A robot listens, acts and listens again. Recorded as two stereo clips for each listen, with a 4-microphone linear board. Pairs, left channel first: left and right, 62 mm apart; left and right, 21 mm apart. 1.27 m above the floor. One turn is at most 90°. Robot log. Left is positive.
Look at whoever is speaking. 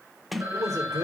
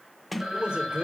note: The man speaking: about 65° right or 115° right.
cmd yaw -65
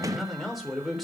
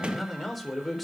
end: Facing the man speaking, 2 to 4 m away.